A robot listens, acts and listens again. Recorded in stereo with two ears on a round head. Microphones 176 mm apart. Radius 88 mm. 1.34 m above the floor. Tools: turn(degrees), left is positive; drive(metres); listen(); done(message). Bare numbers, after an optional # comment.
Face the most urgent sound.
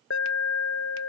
# The alarm: about 70° left or 110° left.
turn(70)
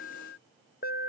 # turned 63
# So it is at 45° left.
turn(45)
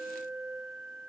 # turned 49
done("Found it: an alarm, straight ahead.")